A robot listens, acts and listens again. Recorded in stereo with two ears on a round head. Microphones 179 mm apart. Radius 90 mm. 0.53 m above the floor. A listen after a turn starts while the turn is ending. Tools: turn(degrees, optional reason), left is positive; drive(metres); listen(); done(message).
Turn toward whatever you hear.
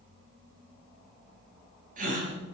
turn(degrees=-45, reason="The gasp: about 45° right or 135° right.")
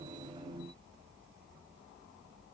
listen()
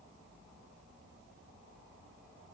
done("I heard a gasp, but can't make it out now. It was about straight ahead or 90° right.")